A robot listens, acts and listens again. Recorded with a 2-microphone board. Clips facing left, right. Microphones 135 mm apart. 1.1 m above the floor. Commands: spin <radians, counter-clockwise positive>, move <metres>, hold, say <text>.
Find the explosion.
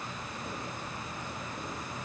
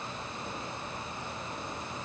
hold
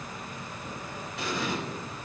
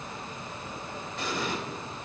spin 0.52
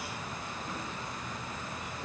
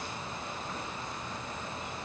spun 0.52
hold
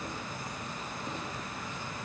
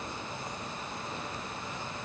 say I heard an explosion, but can't make it out now. It was about 25° right or 145° left.